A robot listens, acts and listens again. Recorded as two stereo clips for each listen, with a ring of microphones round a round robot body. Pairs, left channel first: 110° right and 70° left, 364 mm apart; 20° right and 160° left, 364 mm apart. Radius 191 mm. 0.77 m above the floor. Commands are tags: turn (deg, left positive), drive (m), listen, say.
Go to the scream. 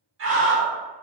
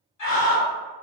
<turn deg="15"/>
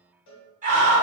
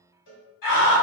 <drive m="1.0"/>
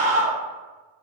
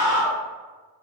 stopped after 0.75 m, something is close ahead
<say>Arrived at the scream, straight ahead.</say>